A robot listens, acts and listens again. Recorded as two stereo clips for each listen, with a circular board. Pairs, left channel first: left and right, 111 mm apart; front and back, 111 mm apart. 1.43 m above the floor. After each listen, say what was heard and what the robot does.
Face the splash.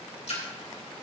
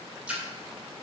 The splash: 100° left. Turn 100° left.
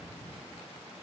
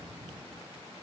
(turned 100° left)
I heard a splash from this way, but can't make it out now.